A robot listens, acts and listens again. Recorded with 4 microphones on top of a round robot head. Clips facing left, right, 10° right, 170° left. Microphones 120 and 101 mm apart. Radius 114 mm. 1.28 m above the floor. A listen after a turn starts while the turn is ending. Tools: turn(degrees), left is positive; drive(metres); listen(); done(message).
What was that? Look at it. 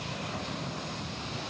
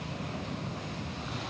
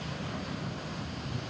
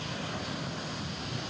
listen()
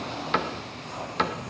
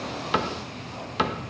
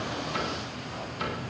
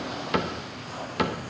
turn(degrees=-170)
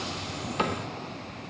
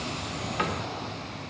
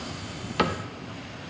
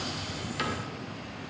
turn(degrees=25)
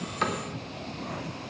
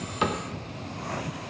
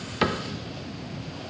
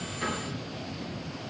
turn(degrees=-10)
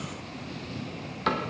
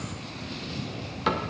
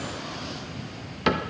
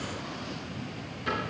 done("Found it: a cupboard door, straight ahead, 1 to 2 m away.")